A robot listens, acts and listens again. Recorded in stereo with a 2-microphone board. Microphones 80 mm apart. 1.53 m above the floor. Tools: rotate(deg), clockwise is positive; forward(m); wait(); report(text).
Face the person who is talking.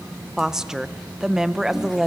rotate(30)
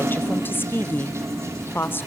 rotate(-25)
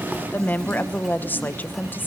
rotate(-25)
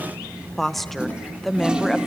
report("Facing the woman speaking.")